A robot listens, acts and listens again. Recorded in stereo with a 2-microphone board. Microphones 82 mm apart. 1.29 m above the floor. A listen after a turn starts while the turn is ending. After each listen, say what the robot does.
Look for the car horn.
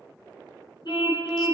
Turn 65° left.
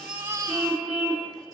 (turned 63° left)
Found it: a car horn, straight ahead.